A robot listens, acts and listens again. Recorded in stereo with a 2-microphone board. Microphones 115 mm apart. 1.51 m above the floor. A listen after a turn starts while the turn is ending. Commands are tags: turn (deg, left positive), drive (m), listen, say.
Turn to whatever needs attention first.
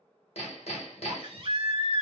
<turn deg="-50"/>
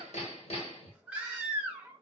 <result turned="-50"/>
<turn deg="-10"/>
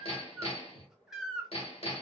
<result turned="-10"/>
<say>Found it: a baby crying, straight ahead, under 1 m away.</say>